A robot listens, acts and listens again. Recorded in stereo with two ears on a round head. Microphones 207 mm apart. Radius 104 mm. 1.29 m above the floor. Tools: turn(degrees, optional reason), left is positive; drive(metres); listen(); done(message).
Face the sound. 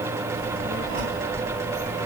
turn(degrees=-35, reason="The child speaking: about 35° right or 145° right.")
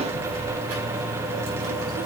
turn(degrees=-115, reason="So it is at 115° right.")
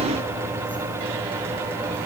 turn(degrees=20, reason="The child speaking is now 20° left.")
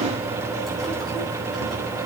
done("Found it: a child speaking, straight ahead.")